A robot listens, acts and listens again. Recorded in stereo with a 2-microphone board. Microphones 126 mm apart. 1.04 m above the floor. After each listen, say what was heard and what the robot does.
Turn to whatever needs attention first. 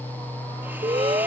The alarm: about 45° right or 135° right. Turn 45° right.
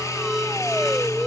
Found it: an alarm, straight ahead.